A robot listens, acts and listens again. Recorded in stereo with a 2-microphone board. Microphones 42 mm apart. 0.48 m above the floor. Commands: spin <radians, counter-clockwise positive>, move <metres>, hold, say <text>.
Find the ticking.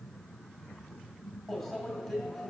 hold
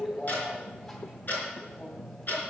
spin 0.79
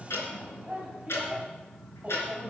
spin 1.57
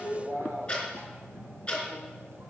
spin 0.44
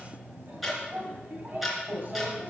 say Found it: ticking, straight ahead.